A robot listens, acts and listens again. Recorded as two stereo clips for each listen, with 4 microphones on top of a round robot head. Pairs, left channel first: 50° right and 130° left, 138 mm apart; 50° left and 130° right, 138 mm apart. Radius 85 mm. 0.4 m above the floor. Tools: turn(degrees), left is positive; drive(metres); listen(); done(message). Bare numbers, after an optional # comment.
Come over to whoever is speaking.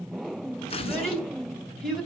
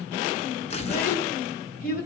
# The child speaking: 35° left.
turn(35)
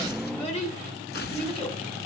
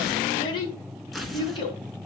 # The child speaking is now 10° right.
turn(-10)
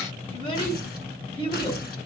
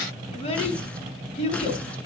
drive(1.0)
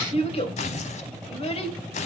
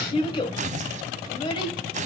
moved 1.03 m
drive(1.0)
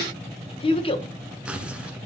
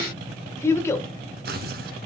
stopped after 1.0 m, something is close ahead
# The child speaking is now 15° right.
turn(-15)
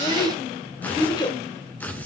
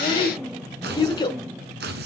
done("I am next to the child speaking.")